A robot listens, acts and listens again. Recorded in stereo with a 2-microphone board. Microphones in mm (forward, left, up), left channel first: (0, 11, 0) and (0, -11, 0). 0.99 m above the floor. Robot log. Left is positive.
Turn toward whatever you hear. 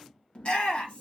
note: The shout: about 60° left or 120° left.
cmd yaw +60
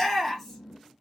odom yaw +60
note: So it is at 10° left.
cmd yaw +10
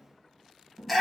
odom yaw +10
end: Found it: a shout, straight ahead, 1 to 2 m away.